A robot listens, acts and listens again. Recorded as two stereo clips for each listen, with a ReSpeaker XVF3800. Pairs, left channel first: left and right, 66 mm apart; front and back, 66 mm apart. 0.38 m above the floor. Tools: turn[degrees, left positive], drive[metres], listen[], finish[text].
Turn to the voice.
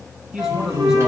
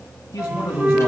Thought: The man speaking: 10° right.
Action: turn[-10]
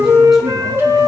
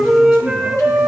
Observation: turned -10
Action: listen[]
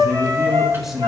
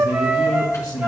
Action: finish[Found it: a man speaking, straight ahead.]